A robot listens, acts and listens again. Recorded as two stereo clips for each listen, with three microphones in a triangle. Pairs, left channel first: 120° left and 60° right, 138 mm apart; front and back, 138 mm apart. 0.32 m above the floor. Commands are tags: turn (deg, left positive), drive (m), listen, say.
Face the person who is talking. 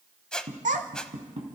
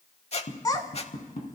<turn deg="-60"/>
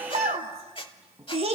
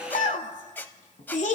<turn deg="-20"/>
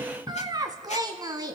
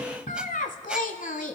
<say>Facing the child speaking, 1 to 2 m away.</say>